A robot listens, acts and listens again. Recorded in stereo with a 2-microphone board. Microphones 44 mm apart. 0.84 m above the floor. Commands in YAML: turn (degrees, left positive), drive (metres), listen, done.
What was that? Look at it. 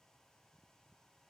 listen: true
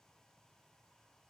listen: true
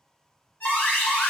turn: 50
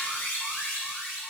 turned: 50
turn: 65
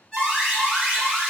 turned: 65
turn: 10
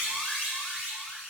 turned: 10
done: "Found it: an alarm, straight ahead, 1 to 2 m away."